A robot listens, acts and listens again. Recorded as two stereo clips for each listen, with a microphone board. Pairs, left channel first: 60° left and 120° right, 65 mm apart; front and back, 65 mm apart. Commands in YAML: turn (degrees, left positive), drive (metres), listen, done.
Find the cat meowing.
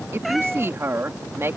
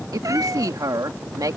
turn: 150
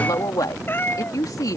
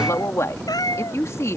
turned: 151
done: "Facing the cat meowing."